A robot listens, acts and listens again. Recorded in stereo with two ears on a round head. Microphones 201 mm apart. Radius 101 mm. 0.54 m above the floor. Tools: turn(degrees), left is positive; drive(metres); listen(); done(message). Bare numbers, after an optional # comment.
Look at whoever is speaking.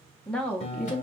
turn(30)
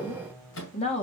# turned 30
# So it is at 145° left.
turn(145)
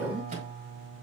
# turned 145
done("Facing the woman speaking.")